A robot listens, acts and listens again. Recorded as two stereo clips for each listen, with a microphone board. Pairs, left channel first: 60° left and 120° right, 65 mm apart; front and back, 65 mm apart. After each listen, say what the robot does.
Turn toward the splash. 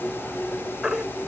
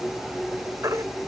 Keep listening.
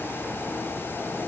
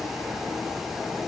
Keep listening.
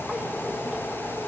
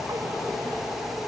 I can't make out a splash to turn to.